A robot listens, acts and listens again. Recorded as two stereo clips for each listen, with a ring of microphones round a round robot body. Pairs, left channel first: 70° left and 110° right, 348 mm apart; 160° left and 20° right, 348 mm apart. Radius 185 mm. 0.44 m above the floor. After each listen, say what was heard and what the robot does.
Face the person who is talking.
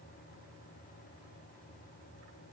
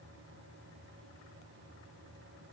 Keep listening.
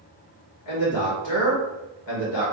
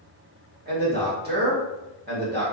The man speaking: 40° left. Turn 40° left.
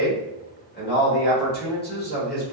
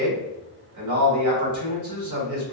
Facing the man speaking, 1 to 2 m away.